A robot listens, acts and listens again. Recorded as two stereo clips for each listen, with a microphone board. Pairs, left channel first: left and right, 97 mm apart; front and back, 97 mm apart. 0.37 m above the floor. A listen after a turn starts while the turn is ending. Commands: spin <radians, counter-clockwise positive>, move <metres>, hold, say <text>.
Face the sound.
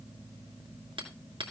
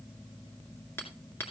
spin -1.13
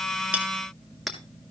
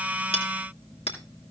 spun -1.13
say Facing the hammering, 2 to 4 m away.